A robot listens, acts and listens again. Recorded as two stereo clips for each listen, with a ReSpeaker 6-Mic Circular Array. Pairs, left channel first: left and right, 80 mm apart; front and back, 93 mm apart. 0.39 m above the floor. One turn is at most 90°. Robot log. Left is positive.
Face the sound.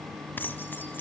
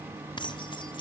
note: The keys jangling: 25° left.
cmd yaw +25
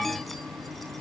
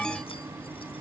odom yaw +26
cmd idle
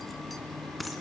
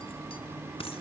end: Facing the keys jangling, 2 to 4 m away.